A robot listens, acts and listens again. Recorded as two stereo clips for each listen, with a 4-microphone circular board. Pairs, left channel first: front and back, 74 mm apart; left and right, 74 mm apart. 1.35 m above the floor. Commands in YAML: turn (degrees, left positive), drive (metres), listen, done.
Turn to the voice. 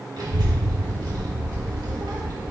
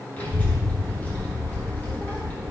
turn: 155
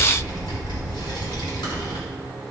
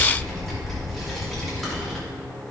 done: "Found it: a child speaking, straight ahead."